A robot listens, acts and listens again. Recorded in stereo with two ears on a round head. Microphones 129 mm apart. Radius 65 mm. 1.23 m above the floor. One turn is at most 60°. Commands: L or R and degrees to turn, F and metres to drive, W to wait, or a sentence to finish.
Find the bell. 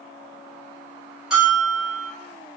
R30
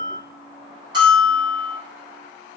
R60
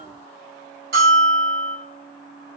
R60
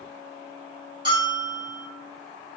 R30
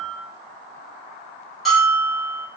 Found it: a bell, straight ahead.